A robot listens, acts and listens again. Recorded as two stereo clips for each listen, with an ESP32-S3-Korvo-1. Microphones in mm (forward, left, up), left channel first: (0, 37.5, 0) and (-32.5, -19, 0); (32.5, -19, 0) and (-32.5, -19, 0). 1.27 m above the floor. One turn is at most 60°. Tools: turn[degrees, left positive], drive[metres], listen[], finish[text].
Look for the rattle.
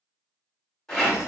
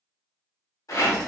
Thought: The rattle: 20° right.
Action: turn[-20]
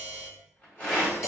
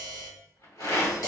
Action: finish[Facing the rattle, 1 to 2 m away.]